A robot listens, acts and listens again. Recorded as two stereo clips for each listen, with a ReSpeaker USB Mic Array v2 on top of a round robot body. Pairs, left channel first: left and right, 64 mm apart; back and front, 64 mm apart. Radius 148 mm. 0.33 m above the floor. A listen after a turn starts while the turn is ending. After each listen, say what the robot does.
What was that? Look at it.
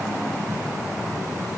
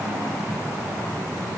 Keep listening.
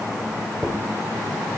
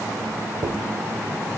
Facing the dropped coin.